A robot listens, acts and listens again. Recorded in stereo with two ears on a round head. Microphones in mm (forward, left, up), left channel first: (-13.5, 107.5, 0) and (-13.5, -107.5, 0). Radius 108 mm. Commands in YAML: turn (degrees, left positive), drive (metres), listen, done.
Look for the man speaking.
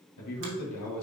turn: 90
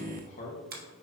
turn: 35
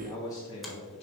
turn: 25
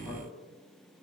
listen: true
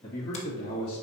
turn: 20
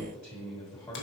done: "Found it: a man speaking, straight ahead."